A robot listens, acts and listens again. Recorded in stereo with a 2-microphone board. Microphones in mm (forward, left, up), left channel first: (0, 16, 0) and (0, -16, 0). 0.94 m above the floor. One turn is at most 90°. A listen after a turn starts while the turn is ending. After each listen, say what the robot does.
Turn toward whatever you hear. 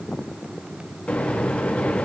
Turn 35° left.
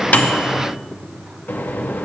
Turn 90° left.
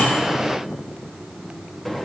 Turn 10° left.
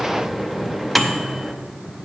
Found it: a microwave, straight ahead, under 1 m away.